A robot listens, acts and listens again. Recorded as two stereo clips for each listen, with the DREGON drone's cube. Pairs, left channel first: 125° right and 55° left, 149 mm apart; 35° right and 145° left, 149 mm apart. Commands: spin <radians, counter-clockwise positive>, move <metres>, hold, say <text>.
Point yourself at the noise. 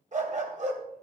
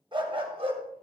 spin 1.66
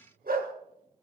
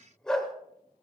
spin 0.96
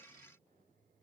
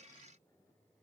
hold
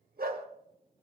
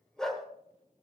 spin 0.96
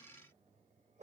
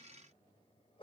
spin 0.35
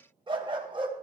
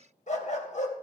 say Found it: a dog barking, straight ahead.